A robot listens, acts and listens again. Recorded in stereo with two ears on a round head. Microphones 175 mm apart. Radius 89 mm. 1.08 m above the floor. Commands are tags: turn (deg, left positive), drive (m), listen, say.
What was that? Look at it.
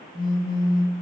<turn deg="20"/>
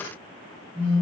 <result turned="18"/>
<say>Found it: a phone buzzing, straight ahead.</say>